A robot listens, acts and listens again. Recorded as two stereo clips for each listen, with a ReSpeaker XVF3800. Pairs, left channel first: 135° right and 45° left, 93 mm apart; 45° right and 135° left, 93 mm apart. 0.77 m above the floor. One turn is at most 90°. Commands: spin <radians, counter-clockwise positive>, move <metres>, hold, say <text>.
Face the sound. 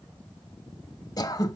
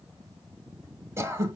spin -1.57
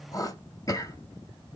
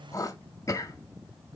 spin -1.57
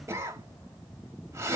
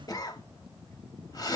spin -0.17
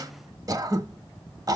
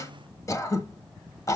say Found it: throat clearing, straight ahead, under 1 m away.